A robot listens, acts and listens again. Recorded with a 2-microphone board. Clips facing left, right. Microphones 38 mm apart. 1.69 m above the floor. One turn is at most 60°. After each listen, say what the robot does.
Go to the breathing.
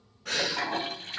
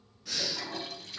Turn 55° left.
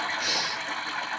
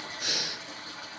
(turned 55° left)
Drive 1.0 m forward.
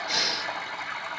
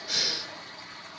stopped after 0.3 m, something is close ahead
Blocked. The breathing is further on, straight ahead.